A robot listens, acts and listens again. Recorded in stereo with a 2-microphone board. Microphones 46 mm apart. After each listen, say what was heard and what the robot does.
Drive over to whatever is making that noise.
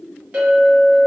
The clink: about 30° right or 150° right. Turn 30° right.
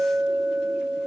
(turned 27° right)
Drive 1.0 m forward.
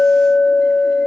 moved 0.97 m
Drive 1.0 m forward.
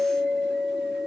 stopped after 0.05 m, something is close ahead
The clink is now 10° left. Turn 10° left.
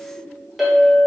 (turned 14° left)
I am next to the clink.